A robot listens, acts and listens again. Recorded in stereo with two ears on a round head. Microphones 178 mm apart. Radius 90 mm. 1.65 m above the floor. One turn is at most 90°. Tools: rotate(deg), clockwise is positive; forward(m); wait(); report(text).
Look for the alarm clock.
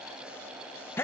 wait()
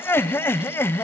wait()
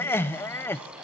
report("I can't make out an alarm clock, only laughter.")